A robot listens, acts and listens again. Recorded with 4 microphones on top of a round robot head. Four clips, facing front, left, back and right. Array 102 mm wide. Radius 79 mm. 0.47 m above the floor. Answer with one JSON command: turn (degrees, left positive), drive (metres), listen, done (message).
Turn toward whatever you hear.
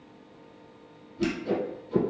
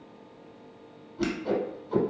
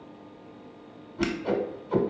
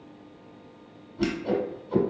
{"turn": 175}
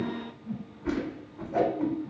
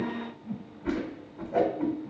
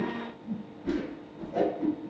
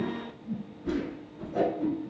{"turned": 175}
{"turn": 55}
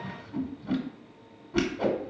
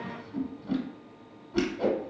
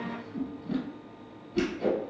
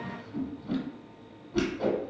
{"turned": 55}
{"turn": 10}
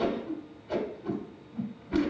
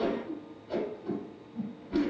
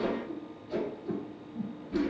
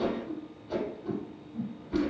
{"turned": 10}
{"done": "Found it: a whoosh, straight ahead."}